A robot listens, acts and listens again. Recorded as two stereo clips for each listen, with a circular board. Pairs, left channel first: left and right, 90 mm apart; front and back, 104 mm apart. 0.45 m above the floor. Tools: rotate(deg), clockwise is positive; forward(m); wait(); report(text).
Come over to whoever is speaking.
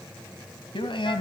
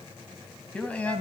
rotate(-75)
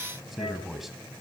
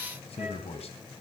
forward(1.0)
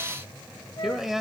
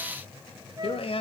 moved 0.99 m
forward(1.0)
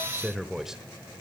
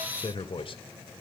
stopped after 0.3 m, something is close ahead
report("I am next to the man speaking.")